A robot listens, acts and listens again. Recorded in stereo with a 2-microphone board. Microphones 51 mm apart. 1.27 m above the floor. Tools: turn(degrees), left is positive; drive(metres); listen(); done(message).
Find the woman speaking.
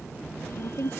turn(degrees=90)
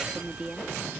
turn(degrees=-15)
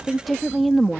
done("Found it: a woman speaking, straight ahead.")